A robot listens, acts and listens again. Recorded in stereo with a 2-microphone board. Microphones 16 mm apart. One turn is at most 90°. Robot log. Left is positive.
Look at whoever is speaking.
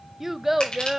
note: The child speaking: about 20° right or 160° right.
cmd yaw -20
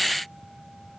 cmd idle
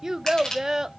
note: So it is at 135° right.
cmd yaw -90
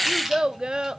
note: The child speaking is now 70° right.
cmd yaw -70
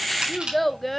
note: The child speaking is now 10° left.
cmd yaw +10
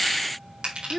end: Found it: a child speaking, straight ahead.